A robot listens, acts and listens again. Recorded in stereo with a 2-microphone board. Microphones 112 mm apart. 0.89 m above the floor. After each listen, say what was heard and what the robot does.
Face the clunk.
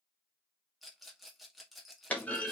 Turn 30° left.
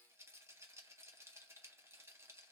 Keep listening.
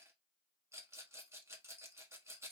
I heard a clunk, but can't make it out now. It was about 15° right or 135° left.